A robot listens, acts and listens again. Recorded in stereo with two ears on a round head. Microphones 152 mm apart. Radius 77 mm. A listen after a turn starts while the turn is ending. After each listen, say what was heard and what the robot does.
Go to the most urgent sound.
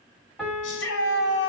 Turn 90° left.
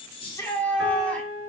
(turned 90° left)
Drive 1.0 m forward.
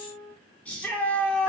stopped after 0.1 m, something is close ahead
The shout is now 10° left. Turn 10° left.
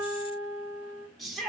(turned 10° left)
Blocked. The shout is further on, straight ahead.